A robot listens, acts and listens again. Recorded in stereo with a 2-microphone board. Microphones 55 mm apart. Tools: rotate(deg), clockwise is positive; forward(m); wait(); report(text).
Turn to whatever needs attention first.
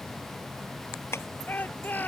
rotate(-35)
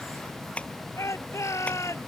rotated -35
rotate(-115)
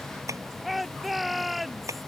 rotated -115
report("Found it: a shout, straight ahead.")